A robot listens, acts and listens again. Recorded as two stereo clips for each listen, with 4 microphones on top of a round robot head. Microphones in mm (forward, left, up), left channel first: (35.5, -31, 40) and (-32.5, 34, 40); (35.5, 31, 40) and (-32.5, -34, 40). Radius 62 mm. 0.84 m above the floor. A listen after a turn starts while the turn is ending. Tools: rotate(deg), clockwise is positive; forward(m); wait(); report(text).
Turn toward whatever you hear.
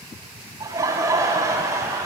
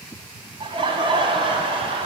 rotate(165)
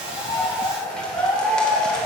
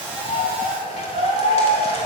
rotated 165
rotate(-40)
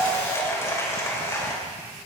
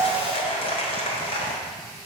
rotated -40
rotate(-20)
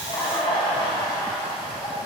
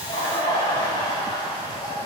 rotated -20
report("Facing the laughter.")